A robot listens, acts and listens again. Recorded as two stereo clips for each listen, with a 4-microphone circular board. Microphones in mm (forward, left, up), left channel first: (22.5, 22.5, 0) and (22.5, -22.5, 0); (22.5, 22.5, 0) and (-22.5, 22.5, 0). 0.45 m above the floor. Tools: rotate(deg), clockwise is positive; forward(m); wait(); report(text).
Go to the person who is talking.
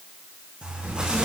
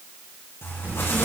rotate(135)
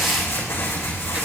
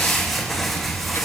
rotate(25)
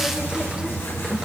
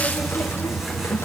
wait()
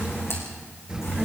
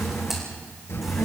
rotate(15)
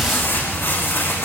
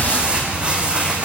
forward(1.0)
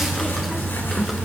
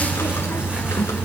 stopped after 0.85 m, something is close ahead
wait()
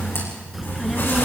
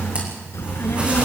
report("Something is in my way. I am facing the child speaking but have not reached it.")